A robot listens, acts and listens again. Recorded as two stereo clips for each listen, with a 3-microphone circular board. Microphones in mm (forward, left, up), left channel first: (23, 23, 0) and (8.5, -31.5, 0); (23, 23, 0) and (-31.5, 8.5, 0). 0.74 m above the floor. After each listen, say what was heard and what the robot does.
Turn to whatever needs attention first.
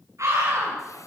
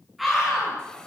The scream: 75° right. Turn 75° right.
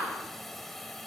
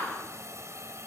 Keep listening.
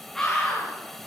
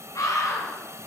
The scream is now 10° right. Turn 10° right.
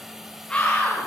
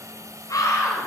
Facing the scream, over 4 m away.